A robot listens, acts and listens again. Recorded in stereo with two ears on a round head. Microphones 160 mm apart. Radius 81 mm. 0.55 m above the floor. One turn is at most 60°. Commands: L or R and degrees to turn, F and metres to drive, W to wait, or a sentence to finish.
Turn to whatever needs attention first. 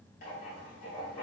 W
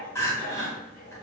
L15
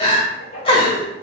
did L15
L60
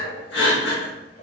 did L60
L60
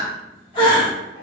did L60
L30
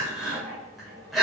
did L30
Found it: crying, straight ahead, 1 to 2 m away.